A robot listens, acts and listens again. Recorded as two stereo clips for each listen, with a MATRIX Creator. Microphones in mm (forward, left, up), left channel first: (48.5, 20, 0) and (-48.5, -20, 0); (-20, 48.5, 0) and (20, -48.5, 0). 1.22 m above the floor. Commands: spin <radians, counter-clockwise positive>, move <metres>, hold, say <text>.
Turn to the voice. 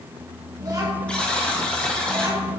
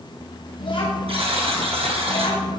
spin 2.62
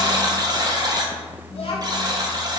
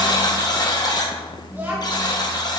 say Facing the child speaking.